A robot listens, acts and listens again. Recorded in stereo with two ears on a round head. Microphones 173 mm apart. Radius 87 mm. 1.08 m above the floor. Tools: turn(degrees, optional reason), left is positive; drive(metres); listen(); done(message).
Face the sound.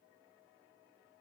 listen()
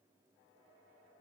listen()
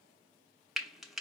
turn(degrees=30)
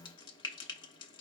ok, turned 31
turn(degrees=150, reason="So it is at 150° left.")
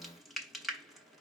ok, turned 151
done("Found it: frying, straight ahead, under 1 m away.")